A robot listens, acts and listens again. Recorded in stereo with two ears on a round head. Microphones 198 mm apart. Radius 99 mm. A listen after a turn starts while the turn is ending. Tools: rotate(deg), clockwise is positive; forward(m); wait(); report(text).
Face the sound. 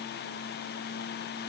wait()
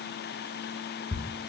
rotate(-30)
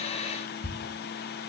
rotate(-140)
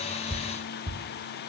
rotate(25)
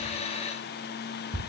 report("Facing the ticking, 1 to 2 m away.")